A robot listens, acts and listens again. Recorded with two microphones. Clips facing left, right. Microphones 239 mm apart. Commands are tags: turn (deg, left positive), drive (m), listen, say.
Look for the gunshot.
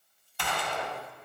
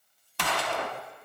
<turn deg="-90"/>
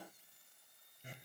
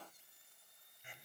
<say>I heard a gunshot from this way, but can't make it out now.</say>